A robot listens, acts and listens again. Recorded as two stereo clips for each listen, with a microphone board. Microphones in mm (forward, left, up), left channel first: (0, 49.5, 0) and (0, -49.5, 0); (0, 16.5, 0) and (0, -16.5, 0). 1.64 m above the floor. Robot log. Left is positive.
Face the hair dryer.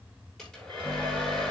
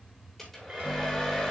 cmd yaw +30
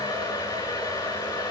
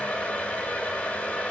note: So it is at 140° left.
cmd yaw +140
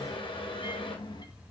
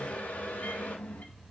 note: The hair dryer is now 65° left.
cmd yaw +65
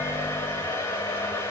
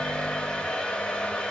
note: The hair dryer is now 30° left.
cmd yaw +30
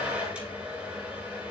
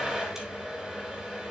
note: The hair dryer is now 10° right.
cmd yaw -10
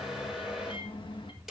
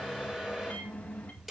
end: Found it: a hair dryer, straight ahead, over 4 m away.